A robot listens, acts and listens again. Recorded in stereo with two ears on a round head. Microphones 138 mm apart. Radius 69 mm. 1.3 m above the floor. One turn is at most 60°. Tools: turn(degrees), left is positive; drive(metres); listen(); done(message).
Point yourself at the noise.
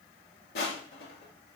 turn(degrees=60)
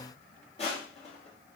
turn(degrees=40)
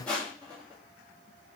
turn(degrees=10)
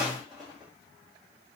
done("Found it: crushing, straight ahead, 1 to 2 m away.")